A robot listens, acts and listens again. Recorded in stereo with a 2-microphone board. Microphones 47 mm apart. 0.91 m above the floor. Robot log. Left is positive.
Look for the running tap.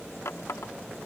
note: The running tap: about 70° left or 110° left.
cmd yaw +70
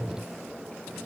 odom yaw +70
cmd idle
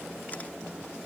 cmd idle
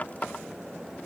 note: So it is at 35° left.
cmd yaw +35
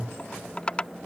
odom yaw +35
note: The running tap is now 25° left.
cmd yaw +25
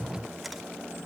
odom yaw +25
cmd idle
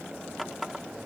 end: Facing the running tap.